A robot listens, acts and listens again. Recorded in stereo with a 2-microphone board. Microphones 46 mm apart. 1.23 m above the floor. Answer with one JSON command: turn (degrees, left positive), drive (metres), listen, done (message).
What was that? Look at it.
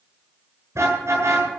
{"turn": -90}
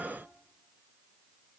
{"listen": true}
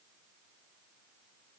{"listen": true}
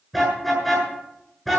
{"done": "Facing the car horn."}